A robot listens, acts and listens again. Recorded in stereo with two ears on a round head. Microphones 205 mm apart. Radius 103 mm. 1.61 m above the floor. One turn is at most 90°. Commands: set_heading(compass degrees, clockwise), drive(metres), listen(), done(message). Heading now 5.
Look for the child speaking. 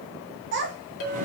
set_heading(60)
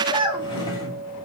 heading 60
set_heading(80)
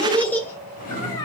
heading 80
set_heading(60)
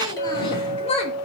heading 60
set_heading(30)
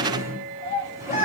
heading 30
set_heading(0)
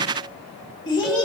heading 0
set_heading(340)
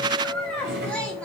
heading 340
done("Facing the child speaking.")